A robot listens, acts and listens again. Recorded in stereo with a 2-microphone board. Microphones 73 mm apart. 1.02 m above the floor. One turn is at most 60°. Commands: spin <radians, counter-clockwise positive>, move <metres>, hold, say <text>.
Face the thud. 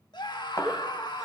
spin 0.87
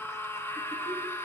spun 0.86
hold
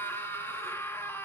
say I heard a thud, but can't make it out now. It was about straight ahead or 80° left.